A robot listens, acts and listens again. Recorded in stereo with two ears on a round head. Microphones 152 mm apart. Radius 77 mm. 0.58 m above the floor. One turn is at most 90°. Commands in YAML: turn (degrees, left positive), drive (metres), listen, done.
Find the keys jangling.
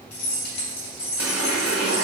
turn: 70
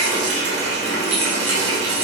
listen: true
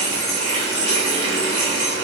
done: "Found it: keys jangling, straight ahead, 1 to 2 m away."